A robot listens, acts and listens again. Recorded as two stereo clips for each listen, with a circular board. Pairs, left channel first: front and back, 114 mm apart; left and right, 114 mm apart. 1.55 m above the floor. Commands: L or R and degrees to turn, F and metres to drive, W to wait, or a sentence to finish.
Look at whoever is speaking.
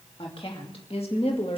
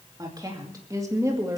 R25
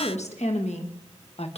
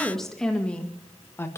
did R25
L25
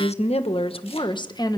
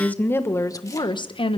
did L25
L55
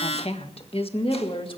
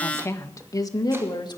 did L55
L40
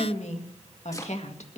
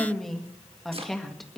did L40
Found it: a woman speaking, straight ahead, 1 to 2 m away.